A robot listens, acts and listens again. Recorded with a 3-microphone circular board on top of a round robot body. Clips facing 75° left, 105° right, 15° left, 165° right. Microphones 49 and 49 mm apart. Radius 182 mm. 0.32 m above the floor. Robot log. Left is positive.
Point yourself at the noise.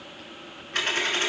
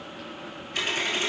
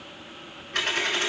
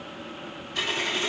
note: The dropped coin: 35° left.
cmd yaw +35
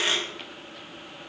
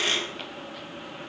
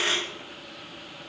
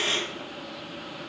end: Facing the dropped coin.